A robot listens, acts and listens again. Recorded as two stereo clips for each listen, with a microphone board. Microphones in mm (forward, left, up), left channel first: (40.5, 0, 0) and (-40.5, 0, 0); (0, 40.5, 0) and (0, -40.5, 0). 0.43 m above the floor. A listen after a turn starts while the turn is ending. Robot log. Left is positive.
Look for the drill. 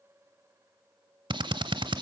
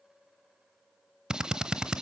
note: The drill: 170° right.
cmd yaw -170
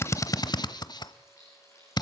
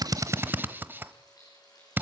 note: The drill is now 25° right.
cmd yaw -25
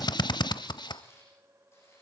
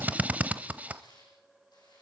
note: The drill is now 20° right.
cmd yaw -20
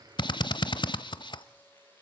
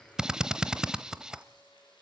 note: The drill is now 10° right.
cmd yaw -10
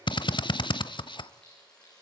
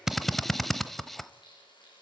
end: Found it: a drill, straight ahead.